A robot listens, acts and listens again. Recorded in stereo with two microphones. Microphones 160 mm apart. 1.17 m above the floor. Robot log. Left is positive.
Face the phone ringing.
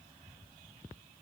cmd idle
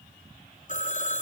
note: The phone ringing: about 50° left or 130° left.
cmd yaw +50
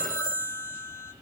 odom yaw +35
note: So it is at 25° left.
cmd yaw +25
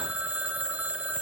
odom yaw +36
note: The phone ringing is now 10° right.
cmd yaw -10
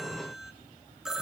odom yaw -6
end: Facing the phone ringing, 1 to 2 m away.